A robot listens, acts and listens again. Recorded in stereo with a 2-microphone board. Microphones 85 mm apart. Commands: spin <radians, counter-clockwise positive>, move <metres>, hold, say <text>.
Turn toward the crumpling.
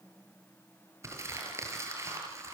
spin -0.61
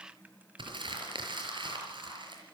spin -1.92
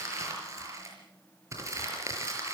spin -0.61
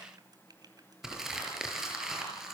say Found it: crumpling, straight ahead, over 4 m away.